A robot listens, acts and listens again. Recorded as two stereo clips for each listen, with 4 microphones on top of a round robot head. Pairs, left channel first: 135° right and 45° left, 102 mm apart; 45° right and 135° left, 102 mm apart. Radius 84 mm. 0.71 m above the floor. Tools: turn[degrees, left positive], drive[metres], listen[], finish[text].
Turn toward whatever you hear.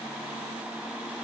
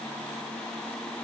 Action: listen[]
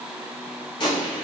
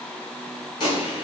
Thought: The gunshot: 90° right.
Action: turn[-90]
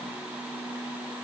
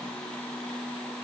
Action: finish[Facing where the gunshot came from. I can't hear it now.]